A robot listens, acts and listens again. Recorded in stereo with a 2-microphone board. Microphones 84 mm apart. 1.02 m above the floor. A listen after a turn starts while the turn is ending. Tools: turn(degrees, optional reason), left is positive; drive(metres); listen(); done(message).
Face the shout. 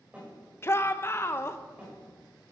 turn(degrees=30, reason="The shout: about 30° left or 150° left.")
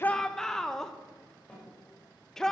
done("Found it: a shout, straight ahead, under 1 m away.")